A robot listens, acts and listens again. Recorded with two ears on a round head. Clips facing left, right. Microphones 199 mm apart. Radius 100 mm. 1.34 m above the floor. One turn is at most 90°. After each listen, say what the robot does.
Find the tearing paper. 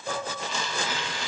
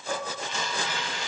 Turn 60° left.
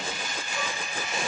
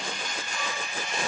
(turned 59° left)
Found it: tearing paper, straight ahead, 1 to 2 m away.